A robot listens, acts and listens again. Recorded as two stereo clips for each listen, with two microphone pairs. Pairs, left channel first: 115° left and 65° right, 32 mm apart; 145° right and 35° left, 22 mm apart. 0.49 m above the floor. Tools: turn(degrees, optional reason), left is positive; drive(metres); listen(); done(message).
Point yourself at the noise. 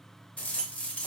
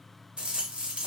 turn(degrees=70, reason="The rattle: 70° left.")
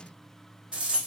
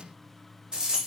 turn(degrees=-10, reason="The rattle is now 10° right.")
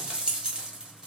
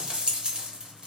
done("Found it: a rattle, straight ahead.")